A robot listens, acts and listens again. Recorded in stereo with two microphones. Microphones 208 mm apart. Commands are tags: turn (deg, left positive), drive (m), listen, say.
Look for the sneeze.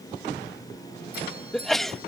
<turn deg="30"/>
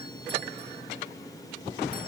<listen/>
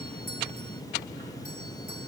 <say>I heard a sneeze, but can't make it out now. It was about 30° right or 150° left.</say>